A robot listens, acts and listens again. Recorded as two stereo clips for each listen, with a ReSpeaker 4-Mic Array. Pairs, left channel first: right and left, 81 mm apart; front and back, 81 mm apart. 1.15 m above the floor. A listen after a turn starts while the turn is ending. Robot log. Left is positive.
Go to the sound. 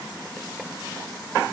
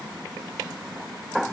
cmd idle
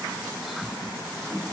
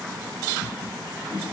cmd idle
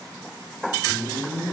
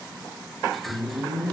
note: The whoosh: 50° right.
cmd yaw -50
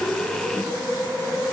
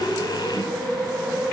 note: The whoosh is now 10° left.
cmd yaw +10
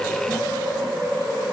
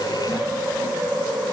cmd fwd 1.0
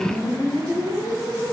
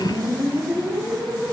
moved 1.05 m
note: The whoosh is now 10° right.
cmd yaw -10
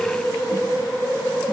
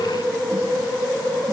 cmd fwd 1.0
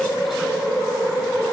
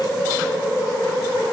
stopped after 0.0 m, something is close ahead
end: I am next to the whoosh.